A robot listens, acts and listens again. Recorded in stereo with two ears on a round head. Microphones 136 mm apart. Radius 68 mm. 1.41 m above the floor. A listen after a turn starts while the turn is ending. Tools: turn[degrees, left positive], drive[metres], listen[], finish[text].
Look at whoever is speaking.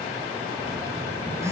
Action: listen[]
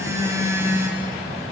Action: listen[]
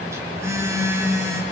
Action: finish[I can't make out anyone speaking to turn to.]